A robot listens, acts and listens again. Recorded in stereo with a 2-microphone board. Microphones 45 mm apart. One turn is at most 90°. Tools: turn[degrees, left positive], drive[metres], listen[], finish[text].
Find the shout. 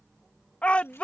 Thought: The shout: about 30° left or 150° left.
Action: turn[30]
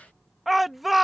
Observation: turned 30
Action: finish[Facing the shout.]